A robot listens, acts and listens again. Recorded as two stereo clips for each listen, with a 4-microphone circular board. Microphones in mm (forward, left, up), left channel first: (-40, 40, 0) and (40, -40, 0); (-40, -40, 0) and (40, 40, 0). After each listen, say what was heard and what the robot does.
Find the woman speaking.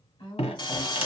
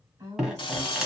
The woman speaking: 100° left. Turn 100° left.
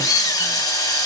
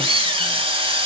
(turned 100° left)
Keep listening.
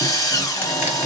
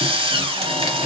Keep listening.
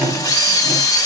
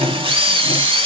I heard a woman speaking from this way, but can't make it out now.